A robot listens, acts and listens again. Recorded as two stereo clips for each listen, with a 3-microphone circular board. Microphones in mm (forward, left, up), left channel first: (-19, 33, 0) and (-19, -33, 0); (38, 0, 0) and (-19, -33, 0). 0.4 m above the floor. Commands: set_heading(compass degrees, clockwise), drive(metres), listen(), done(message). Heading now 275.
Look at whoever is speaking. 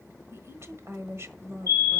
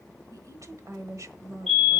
set_heading(45)
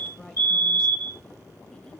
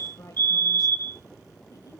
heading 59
set_heading(44)
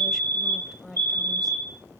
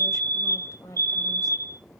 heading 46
done("Found it: a woman speaking, straight ahead.")